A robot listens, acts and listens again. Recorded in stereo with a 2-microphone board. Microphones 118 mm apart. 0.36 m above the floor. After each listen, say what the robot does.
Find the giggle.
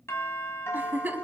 Turn 30° right.
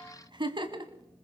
Turn 135° right.
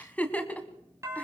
Turn 10° left.
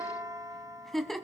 Facing the giggle, 1 to 2 m away.